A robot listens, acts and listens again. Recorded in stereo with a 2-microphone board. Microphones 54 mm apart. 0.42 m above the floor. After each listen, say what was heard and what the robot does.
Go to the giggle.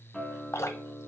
Keep listening.
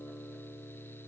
Keep listening.
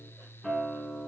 I can't make out a giggle to turn to.